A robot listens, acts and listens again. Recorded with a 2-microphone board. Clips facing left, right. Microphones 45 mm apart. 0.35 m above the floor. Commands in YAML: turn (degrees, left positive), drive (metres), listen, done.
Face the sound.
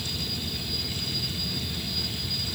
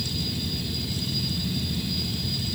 listen: true
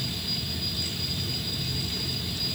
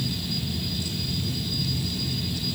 listen: true
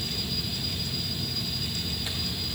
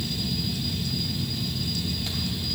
done: "I can't make out anything."